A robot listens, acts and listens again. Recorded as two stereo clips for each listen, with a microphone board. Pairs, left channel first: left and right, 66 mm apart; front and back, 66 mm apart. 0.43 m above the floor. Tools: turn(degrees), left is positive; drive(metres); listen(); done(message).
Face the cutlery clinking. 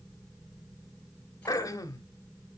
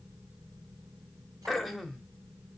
listen()
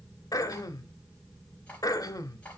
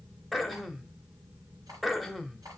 listen()
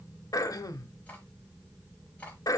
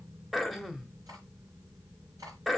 done("I can't make out cutlery clinking, only throat clearing.")